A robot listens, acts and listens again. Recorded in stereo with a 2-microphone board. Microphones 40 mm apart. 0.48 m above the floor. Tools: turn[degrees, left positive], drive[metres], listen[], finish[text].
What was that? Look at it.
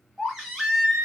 Action: turn[-30]
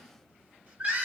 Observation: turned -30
Thought: So it is at 140° right.
Action: turn[-140]
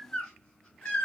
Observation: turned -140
Thought: The baby crying is now 25° left.
Action: turn[25]
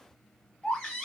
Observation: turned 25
Thought: The baby crying is now 15° left.
Action: turn[15]
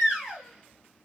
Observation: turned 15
Action: finish[Facing the baby crying.]